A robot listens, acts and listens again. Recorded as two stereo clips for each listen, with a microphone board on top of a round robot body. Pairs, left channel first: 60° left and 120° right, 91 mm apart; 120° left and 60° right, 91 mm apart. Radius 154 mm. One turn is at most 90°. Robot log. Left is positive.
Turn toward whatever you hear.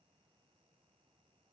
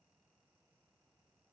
cmd idle
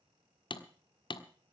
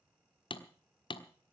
note: The hammering: 90° left.
cmd yaw +90
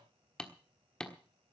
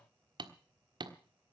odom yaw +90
note: The hammering is now 25° right.
cmd yaw -25
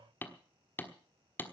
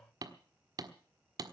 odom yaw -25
note: The hammering is now 10° right.
cmd yaw -10
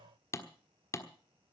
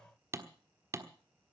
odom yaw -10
end: Found it: hammering, straight ahead, 1 to 2 m away.